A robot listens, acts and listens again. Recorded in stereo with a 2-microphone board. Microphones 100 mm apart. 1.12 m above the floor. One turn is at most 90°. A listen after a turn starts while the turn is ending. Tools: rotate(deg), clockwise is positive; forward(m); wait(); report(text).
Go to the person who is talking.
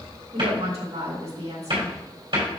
rotate(90)
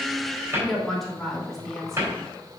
forward(1.0)
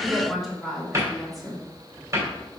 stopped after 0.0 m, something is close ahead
report("Blocked. The woman speaking is further on, straight ahead.")